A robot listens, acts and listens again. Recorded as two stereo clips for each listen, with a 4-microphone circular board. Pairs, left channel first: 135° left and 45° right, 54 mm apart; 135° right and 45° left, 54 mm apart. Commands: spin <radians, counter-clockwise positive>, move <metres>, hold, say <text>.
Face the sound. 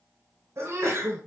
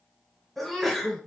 spin -0.87
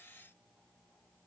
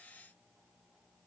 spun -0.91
say I heard a sneeze from this way, but can't make it out now.